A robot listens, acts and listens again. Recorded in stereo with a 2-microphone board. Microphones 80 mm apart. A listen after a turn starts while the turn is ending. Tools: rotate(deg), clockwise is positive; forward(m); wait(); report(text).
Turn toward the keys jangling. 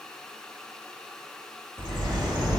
wait()
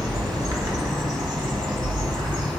wait()
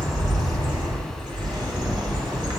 report("I can't make out keys jangling to turn to.")